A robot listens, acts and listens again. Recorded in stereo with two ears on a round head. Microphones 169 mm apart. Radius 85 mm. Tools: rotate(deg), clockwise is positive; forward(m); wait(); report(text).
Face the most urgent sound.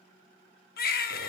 rotate(-50)
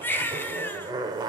rotate(-15)
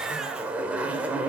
wait()
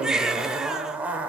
report("Facing the baby crying, under 1 m away.")